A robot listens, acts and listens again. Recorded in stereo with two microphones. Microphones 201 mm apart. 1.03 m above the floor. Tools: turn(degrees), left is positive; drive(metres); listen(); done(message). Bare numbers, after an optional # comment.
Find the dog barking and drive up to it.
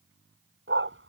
turn(-90)
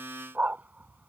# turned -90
# So it is at 10° right.
turn(-10)
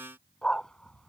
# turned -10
drive(1.0)
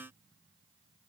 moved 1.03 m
listen()
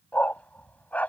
drive(1.0)
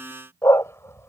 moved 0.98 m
# The dog barking is now 15° left.
turn(15)
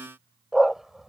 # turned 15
drive(1.0)
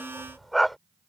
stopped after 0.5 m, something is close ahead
done("I am next to the dog barking.")